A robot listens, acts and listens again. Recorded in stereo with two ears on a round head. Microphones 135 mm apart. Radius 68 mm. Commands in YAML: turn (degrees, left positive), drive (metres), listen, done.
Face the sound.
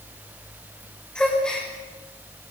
turn: 30
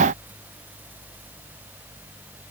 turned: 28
listen: true
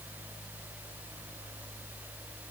done: "I heard a gasp, but can't make it out now. It was about 25° right or 145° left."